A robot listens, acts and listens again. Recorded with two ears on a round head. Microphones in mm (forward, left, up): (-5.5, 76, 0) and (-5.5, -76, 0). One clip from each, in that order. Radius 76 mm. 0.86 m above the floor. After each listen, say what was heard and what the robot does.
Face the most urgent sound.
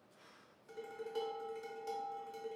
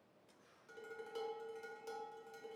Keep listening.
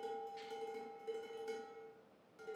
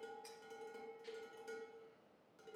Keep listening.
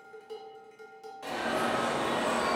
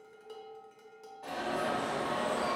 The alarm: about 60° left or 120° left. Turn 60° left.
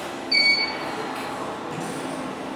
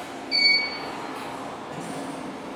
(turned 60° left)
Found it: an alarm, straight ahead.